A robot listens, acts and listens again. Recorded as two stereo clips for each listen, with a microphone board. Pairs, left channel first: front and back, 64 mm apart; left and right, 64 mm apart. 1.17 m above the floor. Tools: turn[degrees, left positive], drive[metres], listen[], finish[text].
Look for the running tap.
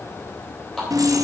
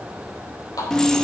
Thought: The running tap: 80° left.
Action: turn[80]
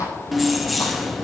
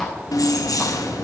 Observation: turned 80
Action: listen[]
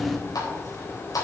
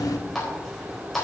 Action: finish[Found it: a running tap, straight ahead, 2 to 4 m away.]